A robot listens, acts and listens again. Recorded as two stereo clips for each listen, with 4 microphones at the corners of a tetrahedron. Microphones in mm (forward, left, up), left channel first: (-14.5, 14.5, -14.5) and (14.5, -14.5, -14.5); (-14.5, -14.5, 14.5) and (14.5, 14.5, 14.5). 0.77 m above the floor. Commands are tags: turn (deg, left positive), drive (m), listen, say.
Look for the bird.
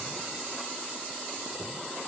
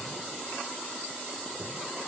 <listen/>
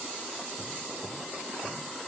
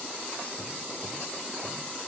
<listen/>
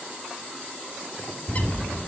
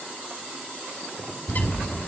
<turn deg="180"/>
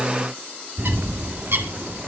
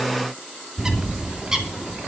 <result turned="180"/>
<turn deg="-30"/>
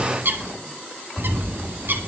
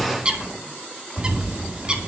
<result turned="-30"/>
<turn deg="-20"/>
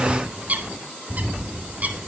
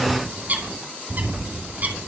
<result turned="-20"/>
<say>Found it: a bird, straight ahead.</say>